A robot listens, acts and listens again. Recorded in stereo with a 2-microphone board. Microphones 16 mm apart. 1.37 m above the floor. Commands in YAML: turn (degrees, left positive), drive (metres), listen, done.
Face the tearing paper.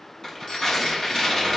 turn: 30
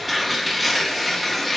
done: "Facing the tearing paper, 2 to 4 m away."